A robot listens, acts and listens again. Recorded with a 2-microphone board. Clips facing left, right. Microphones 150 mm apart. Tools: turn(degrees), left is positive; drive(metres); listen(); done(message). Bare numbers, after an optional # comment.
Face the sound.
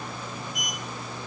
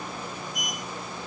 turn(30)
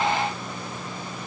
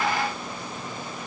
listen()
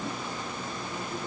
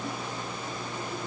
listen()
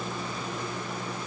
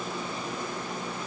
done("I heard a sliding door, but can't make it out now. It was about 25° right or 145° left.")